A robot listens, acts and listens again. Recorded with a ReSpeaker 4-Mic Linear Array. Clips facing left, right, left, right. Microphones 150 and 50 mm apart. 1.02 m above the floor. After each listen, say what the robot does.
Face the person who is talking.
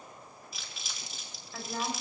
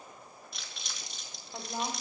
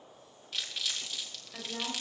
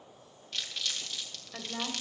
Turn 20° right.
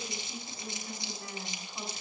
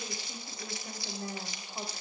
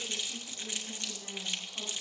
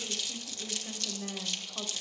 Turn 140° right.
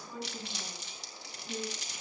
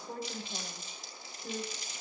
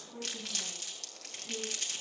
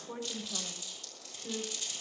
Turn 60° right.
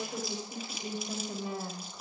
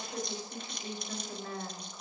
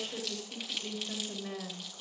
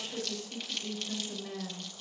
Turn 15° left.
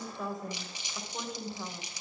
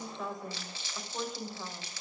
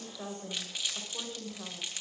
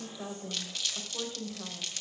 Found it: a woman speaking, straight ahead.